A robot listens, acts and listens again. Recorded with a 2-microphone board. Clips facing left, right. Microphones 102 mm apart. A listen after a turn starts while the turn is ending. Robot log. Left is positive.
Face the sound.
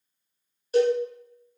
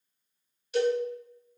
note: The cowbell: about 40° left or 140° left.
cmd yaw +40
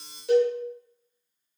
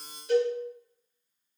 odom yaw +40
note: So it is at 105° left.
cmd yaw +105
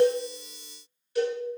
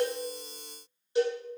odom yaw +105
note: The cowbell is now 20° right.
cmd yaw -20
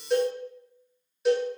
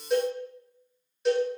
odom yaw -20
end: Facing the cowbell.